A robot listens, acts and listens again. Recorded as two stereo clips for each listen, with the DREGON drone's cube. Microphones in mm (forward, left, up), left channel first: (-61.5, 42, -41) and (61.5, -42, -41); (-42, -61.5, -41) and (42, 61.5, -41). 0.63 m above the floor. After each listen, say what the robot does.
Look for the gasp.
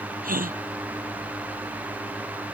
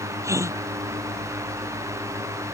Turn 15° right.
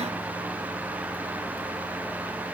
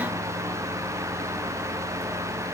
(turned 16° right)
I heard a gasp from this way, but can't make it out now.